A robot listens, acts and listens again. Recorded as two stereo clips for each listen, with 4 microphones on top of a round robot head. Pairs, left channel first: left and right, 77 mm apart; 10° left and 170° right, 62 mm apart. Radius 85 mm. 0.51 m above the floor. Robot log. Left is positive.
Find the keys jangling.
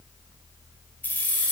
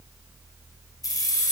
note: The keys jangling: 20° left.
cmd yaw +20
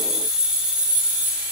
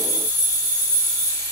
note: The keys jangling is now 15° right.
cmd yaw -15
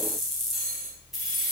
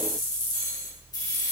end: Facing the keys jangling, 2 to 4 m away.